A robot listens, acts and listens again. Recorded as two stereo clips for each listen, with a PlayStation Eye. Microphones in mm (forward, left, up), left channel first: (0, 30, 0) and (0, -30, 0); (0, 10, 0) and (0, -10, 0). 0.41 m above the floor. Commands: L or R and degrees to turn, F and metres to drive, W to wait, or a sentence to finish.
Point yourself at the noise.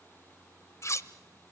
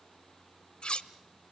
L55
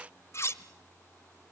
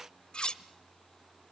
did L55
L60
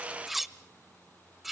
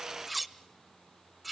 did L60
Facing the cutlery clinking, under 1 m away.